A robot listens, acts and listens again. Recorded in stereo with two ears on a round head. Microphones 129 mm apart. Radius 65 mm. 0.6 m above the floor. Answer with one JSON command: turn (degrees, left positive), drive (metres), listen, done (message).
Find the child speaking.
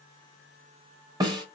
{"listen": true}
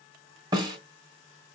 {"listen": true}
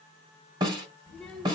{"turn": 30}
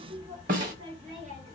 {"turn": -50}
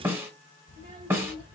{"turn": -25}
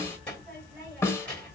{"turn": 10}
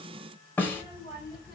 {"done": "Found it: a child speaking, straight ahead, 1 to 2 m away."}